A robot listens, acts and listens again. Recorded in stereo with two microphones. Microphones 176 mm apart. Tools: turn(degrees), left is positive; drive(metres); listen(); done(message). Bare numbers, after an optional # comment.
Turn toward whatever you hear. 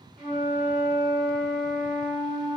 # The flute: about 45° right or 135° right.
turn(-45)
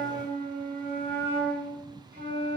# So it is at 85° right.
turn(-85)
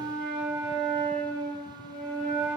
done("Facing the flute, 1 to 2 m away.")